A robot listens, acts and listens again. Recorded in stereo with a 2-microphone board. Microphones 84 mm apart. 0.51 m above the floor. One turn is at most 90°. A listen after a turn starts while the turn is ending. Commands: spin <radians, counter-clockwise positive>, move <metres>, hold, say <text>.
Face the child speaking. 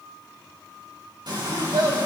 spin -1.22
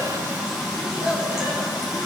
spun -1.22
hold
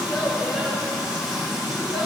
hold
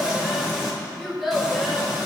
say Facing the child speaking.